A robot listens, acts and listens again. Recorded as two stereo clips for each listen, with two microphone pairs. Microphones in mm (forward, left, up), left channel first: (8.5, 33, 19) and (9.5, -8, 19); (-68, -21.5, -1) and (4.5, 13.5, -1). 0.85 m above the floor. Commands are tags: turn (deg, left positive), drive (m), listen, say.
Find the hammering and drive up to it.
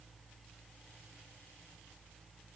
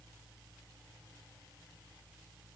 <listen/>
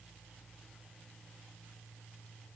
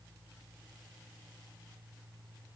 <listen/>
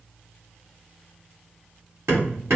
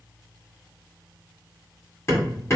<turn deg="-100"/>
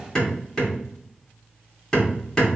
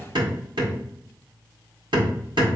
<turn deg="20"/>
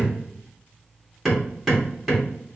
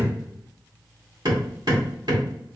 <drive m="1.0"/>
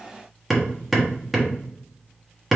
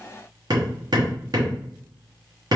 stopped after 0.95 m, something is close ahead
<say>I am next to the hammering.</say>